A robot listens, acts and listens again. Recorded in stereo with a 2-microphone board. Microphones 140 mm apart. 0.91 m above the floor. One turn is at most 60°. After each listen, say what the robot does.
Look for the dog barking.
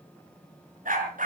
Turn 60° right.
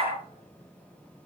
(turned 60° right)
Turn 45° right.
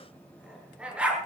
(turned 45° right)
Turn 10° right.
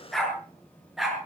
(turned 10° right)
Found it: a dog barking, straight ahead.